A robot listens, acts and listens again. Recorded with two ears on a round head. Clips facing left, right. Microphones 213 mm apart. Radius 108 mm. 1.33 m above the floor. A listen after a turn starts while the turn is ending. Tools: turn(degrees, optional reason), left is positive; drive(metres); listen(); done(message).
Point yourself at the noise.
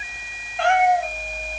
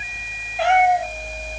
turn(degrees=-30)
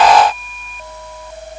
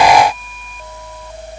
listen()
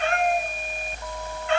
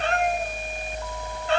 turn(degrees=-145, reason="So it is at 145° right.")
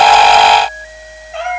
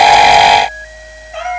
done("Found it: a cat meowing, straight ahead.")